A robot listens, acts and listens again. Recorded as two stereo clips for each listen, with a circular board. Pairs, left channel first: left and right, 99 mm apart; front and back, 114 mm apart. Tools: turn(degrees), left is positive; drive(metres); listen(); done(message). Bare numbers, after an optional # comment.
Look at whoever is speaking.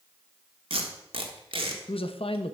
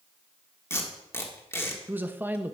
# The man speaking: 105° left.
turn(105)
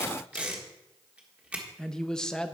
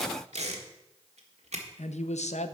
done("Found it: a man speaking, straight ahead.")